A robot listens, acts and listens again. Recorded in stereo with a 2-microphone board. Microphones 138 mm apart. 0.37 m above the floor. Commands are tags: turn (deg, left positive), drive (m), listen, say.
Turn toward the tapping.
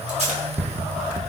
<turn deg="-15"/>
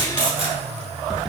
<say>Found it: tapping, straight ahead.</say>